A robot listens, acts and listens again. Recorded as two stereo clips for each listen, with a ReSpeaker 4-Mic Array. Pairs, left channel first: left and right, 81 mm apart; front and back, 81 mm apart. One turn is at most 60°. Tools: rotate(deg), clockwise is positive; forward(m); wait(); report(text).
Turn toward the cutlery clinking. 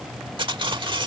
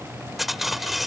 rotate(60)
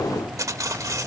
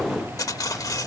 rotate(45)
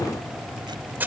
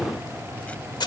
rotate(25)
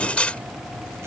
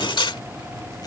rotate(-15)
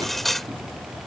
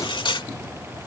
report("Found it: cutlery clinking, straight ahead.")